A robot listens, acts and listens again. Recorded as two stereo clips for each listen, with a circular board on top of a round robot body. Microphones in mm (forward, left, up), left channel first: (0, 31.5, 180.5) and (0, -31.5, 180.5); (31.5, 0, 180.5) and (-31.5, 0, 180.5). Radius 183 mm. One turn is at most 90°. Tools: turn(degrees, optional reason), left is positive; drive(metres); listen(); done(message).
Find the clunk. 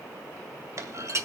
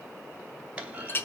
turn(degrees=-90, reason="The clunk: 110° right.")
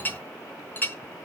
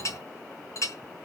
turn(degrees=-20, reason="Nothing new. It was at 20° right.")
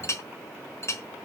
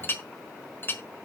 done("Facing where the clunk came from. I can't hear it now.")